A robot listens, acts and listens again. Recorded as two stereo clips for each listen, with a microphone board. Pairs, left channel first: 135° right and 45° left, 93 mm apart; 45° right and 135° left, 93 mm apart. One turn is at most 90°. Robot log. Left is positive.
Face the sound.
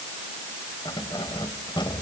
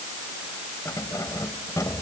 note: The keys jangling: 100° right.
cmd yaw -90
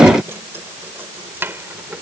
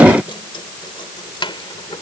note: The keys jangling is now 25° right.
cmd yaw -25
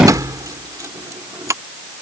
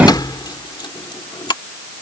note: The keys jangling is now 10° right.
cmd yaw -10
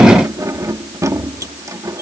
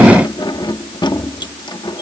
note: The keys jangling is now 10° right.
cmd yaw -10
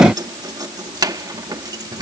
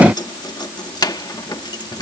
end: Facing the keys jangling.